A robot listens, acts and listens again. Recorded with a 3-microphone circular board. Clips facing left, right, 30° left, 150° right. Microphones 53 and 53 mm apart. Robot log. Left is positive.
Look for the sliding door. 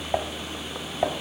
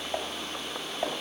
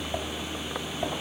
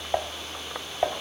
cmd idle
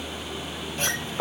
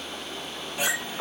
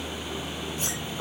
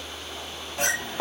note: The sliding door: 170° right.
cmd yaw -170
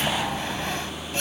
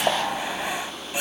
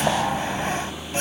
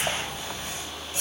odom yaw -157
note: The sliding door is now 10° right.
cmd yaw -10
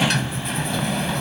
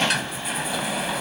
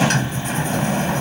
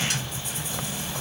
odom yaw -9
end: Facing the sliding door.